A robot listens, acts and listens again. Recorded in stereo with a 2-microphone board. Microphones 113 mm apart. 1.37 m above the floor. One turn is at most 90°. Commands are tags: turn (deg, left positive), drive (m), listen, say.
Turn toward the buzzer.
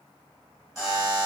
<turn deg="-30"/>
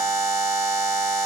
<turn deg="-90"/>
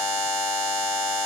<turn deg="-35"/>
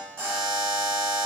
<turn deg="10"/>
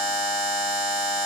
<say>Facing the buzzer.</say>